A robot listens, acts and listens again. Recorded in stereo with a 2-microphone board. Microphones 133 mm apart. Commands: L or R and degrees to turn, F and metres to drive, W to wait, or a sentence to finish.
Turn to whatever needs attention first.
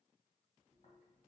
W
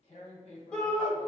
L30
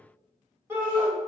R20
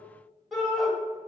Facing the shout, 1 to 2 m away.